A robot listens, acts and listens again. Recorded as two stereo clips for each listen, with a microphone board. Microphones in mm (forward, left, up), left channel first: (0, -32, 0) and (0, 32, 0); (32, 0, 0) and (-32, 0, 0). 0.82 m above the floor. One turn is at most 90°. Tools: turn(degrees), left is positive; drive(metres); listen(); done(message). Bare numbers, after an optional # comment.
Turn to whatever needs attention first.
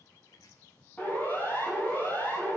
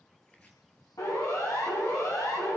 # The siren: 25° right.
turn(-25)
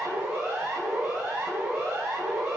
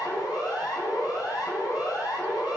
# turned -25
# The siren is now 15° left.
turn(15)
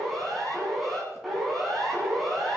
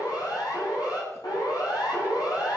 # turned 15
done("Facing the siren, over 4 m away.")